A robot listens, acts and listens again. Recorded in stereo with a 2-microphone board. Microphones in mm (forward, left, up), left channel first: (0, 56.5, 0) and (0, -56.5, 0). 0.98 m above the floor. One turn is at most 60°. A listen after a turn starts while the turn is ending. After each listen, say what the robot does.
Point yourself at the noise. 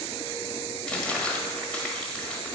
Turn 30° left.
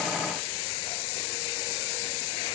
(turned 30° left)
Keep listening.
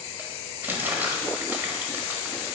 Turn 20° right.
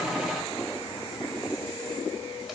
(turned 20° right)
Keep listening.
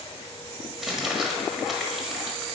Found it: crumpling, straight ahead, 1 to 2 m away.